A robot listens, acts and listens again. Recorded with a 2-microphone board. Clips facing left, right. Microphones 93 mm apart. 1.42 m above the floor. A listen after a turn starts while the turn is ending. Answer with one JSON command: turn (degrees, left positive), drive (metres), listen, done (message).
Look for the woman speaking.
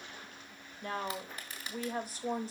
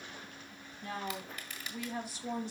{"turn": 40}
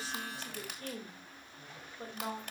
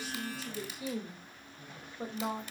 {"turn": -15}
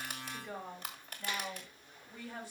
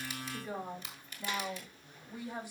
{"turn": -15}
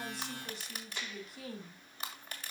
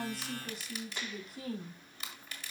{"done": "Facing the woman speaking."}